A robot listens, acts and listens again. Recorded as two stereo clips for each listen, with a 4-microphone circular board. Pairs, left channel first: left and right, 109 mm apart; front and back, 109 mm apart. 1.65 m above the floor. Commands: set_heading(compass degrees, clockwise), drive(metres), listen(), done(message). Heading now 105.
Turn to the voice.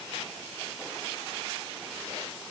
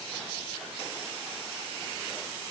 listen()
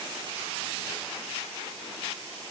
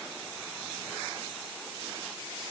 listen()
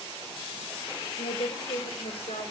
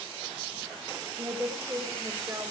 set_heading(355)
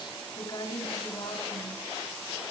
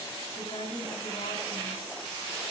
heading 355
set_heading(320)
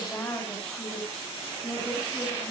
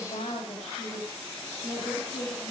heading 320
set_heading(310)
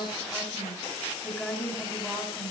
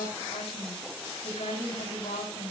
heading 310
done("Facing the woman speaking.")